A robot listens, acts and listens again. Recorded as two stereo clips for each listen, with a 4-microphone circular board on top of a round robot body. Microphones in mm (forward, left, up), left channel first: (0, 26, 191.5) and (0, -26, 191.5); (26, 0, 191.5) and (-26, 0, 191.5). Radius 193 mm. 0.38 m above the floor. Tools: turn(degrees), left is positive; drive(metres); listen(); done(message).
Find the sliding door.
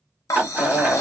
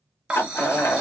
turn(degrees=-35)
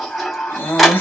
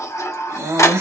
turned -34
done("Found it: a sliding door, straight ahead.")